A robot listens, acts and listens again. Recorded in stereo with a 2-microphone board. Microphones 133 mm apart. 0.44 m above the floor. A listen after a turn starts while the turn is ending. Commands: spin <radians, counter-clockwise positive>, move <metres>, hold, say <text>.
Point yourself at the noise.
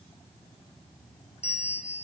spin 0.96
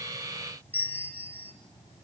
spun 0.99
spin 0.35
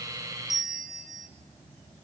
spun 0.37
say Facing the bell.